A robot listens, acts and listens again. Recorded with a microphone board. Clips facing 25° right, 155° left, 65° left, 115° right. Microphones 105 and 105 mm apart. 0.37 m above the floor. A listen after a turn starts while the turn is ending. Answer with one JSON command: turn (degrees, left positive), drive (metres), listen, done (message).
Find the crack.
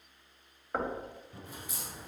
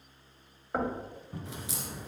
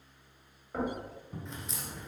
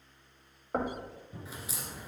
{"turn": 165}
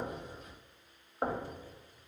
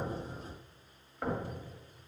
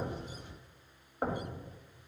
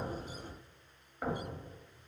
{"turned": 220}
{"turn": -55}
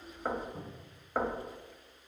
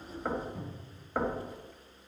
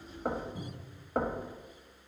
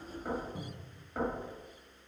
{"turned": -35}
{"turn": -20}
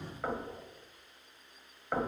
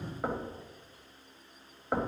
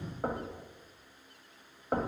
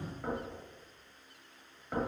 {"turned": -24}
{"done": "Facing where the crack came from. I can't hear it now."}